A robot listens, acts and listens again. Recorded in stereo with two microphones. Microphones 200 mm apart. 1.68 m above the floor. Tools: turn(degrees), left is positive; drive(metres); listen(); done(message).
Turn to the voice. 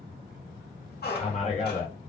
turn(degrees=35)
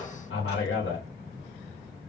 turn(degrees=110)
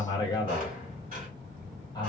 turn(degrees=20)
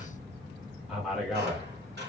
done("Facing the man speaking, under 1 m away.")